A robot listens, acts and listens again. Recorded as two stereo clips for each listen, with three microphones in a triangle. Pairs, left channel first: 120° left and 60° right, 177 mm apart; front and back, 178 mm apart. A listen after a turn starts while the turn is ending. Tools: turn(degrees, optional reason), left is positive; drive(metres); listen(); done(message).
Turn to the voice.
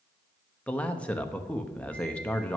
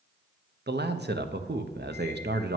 turn(degrees=-155, reason="The man speaking: 155° right.")
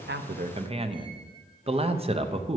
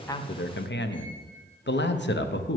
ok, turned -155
done("Found it: a man speaking, straight ahead.")